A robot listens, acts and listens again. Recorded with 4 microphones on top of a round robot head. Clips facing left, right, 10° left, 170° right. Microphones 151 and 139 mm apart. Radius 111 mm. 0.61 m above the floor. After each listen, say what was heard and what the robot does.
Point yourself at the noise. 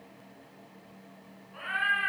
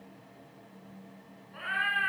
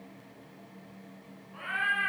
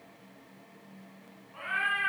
The cat meowing: 55° right. Turn 55° right.
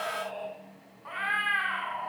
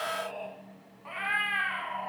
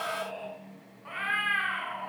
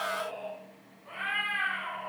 The cat meowing is now 25° right. Turn 25° right.
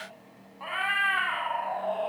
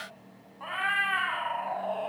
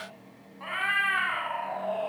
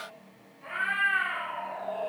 The cat meowing is now 10° right. Turn 10° right.
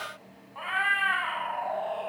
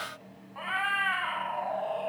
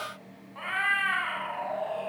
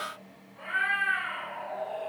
Facing the cat meowing, 2 to 4 m away.